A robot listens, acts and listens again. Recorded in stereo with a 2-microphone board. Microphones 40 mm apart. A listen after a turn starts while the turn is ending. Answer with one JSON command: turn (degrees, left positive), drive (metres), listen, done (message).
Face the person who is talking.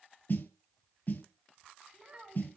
{"turn": -30}
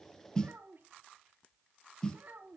{"turn": -115}
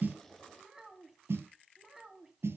{"turn": -10}
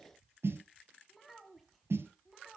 {"done": "Found it: a child speaking, straight ahead."}